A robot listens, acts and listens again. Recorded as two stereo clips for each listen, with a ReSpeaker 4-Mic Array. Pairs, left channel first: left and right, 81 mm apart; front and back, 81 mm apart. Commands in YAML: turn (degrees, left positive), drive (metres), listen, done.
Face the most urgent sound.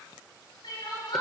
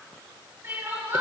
turn: 120
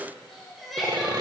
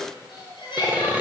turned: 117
done: "Found it: crying, straight ahead, over 4 m away."